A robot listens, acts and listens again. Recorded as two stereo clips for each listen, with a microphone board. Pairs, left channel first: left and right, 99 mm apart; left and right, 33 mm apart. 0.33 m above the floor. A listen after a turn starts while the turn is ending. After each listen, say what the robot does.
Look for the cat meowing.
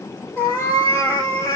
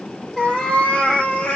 Turn 35° left.
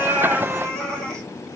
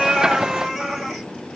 Facing the cat meowing, 2 to 4 m away.